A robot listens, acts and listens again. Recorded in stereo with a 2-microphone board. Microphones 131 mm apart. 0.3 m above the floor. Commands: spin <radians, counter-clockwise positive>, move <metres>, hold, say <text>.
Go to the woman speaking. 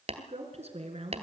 spin -0.96
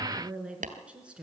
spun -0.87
spin -0.17
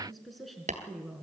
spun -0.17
move 1.0
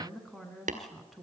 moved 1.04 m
move 1.0
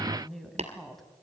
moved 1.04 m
move 1.0
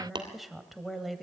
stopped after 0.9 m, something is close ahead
say I am next to the woman speaking.